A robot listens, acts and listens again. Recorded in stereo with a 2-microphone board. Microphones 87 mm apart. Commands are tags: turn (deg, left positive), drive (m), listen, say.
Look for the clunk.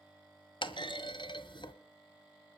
<turn deg="65"/>
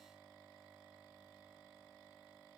<listen/>
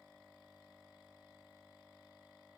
<say>I heard a clunk, but can't make it out now. It was about straight ahead or 50° left.</say>